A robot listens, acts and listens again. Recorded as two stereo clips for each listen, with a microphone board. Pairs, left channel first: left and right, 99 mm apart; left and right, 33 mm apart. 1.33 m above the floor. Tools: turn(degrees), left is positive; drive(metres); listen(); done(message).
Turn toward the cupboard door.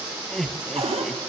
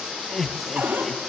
turn(degrees=-90)
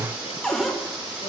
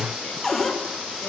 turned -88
done("Facing the cupboard door.")